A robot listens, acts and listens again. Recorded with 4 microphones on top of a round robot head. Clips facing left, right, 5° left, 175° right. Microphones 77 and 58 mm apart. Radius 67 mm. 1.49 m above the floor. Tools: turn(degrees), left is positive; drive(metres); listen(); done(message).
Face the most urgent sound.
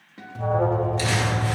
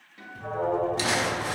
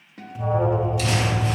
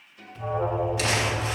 turn(degrees=80)
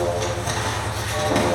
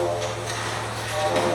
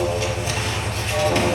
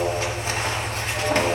turn(degrees=-10)
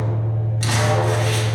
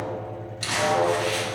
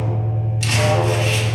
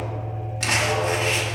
done("Found it: an alarm, straight ahead.")